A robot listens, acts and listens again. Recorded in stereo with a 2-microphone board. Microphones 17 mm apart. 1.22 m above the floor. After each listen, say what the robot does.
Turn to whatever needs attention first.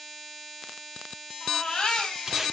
Turn 60° left.
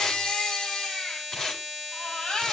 Turn 60° left.
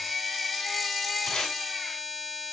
Facing the baby crying, over 4 m away.